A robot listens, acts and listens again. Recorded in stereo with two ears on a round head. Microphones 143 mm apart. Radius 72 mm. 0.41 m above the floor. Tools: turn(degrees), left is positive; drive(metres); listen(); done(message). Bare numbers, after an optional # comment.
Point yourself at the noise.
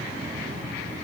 listen()
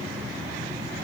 listen()
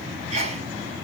# The sneeze: about 40° right or 140° right.
turn(-40)
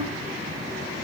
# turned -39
listen()
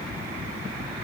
done("I heard a sneeze, but can't make it out now. It was about straight ahead or 100° right.")